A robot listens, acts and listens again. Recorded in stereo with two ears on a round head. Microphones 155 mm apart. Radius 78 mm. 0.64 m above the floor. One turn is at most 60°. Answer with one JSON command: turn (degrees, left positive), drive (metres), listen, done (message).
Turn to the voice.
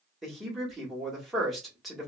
{"turn": 30}
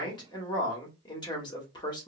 {"turn": 60}
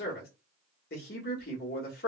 {"turn": 60}
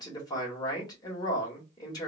{"turn": 25}
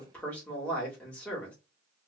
{"turn": 10}
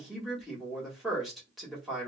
{"done": "Found it: a man speaking, straight ahead."}